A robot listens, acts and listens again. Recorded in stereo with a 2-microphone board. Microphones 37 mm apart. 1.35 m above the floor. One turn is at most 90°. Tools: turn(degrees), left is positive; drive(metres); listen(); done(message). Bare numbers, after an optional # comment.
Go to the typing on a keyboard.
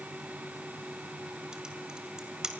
# The typing on a keyboard: about 20° right or 160° right.
turn(-20)
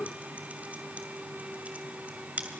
# So it is at 140° right.
turn(-90)
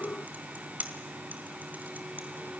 # The typing on a keyboard is now 55° right.
turn(-55)
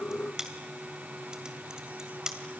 # The typing on a keyboard is now 20° right.
turn(-20)
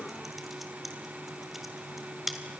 drive(1.0)
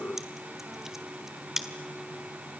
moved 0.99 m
# The typing on a keyboard is now 10° right.
turn(-10)
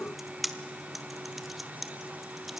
drive(1.0)
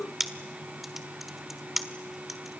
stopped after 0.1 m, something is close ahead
done("Arrived at the typing on a keyboard, straight ahead.")